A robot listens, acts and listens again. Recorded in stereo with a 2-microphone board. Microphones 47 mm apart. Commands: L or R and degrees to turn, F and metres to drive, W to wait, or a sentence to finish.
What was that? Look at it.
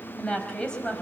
L20
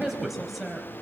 Facing the woman speaking, over 4 m away.